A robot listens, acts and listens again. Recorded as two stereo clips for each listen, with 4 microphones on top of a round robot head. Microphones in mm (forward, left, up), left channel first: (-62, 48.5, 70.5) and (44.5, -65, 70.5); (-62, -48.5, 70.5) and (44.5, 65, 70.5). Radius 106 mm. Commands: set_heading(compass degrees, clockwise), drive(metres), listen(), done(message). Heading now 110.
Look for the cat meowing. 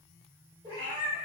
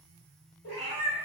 set_heading(275)
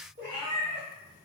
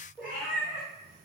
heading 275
set_heading(300)
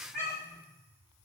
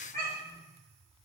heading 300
done("Found it: a cat meowing, straight ahead.")